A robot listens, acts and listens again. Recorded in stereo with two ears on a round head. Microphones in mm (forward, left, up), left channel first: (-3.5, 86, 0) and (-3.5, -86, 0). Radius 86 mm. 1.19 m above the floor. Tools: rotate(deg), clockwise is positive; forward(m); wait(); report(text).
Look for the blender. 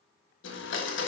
rotate(-70)
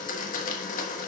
rotate(-45)
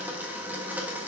rotate(10)
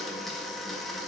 report("Facing the blender, 1 to 2 m away.")